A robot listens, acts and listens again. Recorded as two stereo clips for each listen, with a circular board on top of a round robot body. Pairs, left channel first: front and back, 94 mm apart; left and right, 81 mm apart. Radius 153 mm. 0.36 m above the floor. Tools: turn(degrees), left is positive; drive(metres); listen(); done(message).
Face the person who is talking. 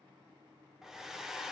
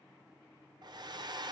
listen()
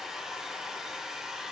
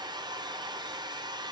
listen()
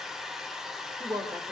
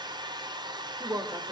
turn(degrees=-135)
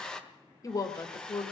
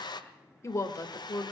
turn(degrees=45)
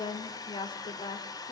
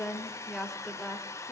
done("Facing the woman speaking.")